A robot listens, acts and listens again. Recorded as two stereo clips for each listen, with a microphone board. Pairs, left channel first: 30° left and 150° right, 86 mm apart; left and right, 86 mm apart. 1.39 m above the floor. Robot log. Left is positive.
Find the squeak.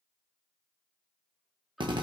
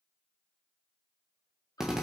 cmd idle
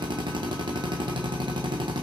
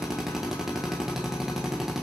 cmd idle
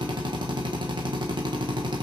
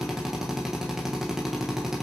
end: I can't make out a squeak to turn to.